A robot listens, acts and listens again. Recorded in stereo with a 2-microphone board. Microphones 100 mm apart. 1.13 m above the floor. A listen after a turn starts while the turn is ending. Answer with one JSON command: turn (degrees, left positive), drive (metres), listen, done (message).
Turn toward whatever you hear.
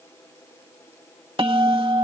{"turn": -60}
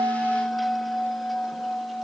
{"done": "Found it: a bell, straight ahead."}